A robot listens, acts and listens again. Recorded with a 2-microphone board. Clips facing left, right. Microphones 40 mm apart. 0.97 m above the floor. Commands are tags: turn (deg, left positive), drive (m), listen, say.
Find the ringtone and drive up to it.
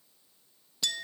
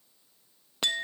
<listen/>
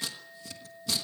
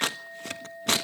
<listen/>
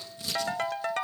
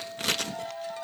<turn deg="60"/>
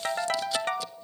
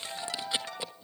<turn deg="55"/>
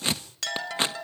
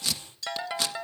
<turn deg="-15"/>
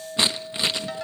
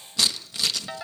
<drive m="1.0"/>
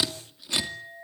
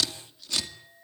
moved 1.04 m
<turn deg="-15"/>
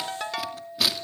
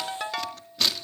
<drive m="1.0"/>
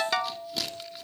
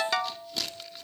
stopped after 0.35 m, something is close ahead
<say>I am next to the ringtone.</say>